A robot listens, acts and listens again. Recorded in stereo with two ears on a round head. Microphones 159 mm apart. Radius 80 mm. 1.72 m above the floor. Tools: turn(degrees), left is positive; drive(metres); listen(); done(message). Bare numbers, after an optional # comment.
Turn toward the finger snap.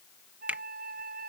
turn(-30)
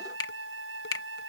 # So it is at 20° left.
turn(20)
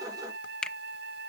done("Facing the finger snap.")